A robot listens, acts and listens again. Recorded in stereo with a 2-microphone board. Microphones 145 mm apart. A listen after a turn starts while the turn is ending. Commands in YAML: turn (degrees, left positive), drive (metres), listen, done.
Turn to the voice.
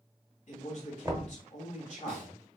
turn: 55
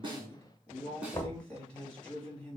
turn: 10
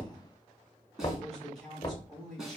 done: "Facing the man speaking, 2 to 4 m away."